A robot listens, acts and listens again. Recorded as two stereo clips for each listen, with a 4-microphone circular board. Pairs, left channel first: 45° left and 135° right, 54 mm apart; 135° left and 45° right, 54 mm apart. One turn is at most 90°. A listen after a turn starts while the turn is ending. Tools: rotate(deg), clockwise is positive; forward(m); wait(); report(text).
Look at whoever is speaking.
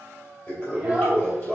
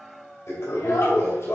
rotate(-90)
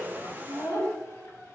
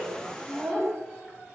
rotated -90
rotate(-35)
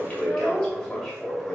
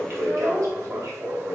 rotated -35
report("Facing the child speaking, 2 to 4 m away.")